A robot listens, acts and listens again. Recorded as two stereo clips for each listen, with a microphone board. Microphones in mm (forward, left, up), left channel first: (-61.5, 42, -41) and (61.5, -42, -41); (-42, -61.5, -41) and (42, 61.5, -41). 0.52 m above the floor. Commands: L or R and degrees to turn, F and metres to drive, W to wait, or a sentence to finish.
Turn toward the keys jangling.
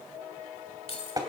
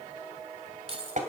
L100
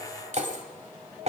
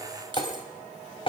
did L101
Found it: keys jangling, straight ahead.